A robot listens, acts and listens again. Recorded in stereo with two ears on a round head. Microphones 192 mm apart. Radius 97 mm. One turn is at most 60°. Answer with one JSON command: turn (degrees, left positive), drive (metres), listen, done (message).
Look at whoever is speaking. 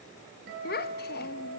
{"turn": 45}
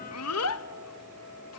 {"turn": 60}
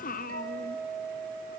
{"turn": 40}
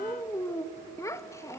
{"turn": 15}
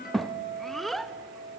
{"done": "Found it: a child speaking, straight ahead, under 1 m away."}